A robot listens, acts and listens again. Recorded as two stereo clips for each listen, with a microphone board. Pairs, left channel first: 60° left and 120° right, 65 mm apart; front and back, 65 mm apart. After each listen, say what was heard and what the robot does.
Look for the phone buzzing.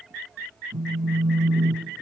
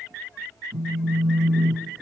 The phone buzzing: 145° right. Turn 145° right.
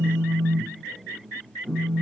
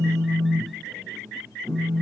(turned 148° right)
Facing the phone buzzing.